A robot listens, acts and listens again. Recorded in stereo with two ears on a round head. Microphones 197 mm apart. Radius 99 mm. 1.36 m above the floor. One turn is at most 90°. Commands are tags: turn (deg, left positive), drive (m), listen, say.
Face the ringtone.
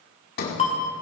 <turn deg="30"/>
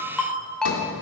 <say>Found it: a ringtone, straight ahead, 2 to 4 m away.</say>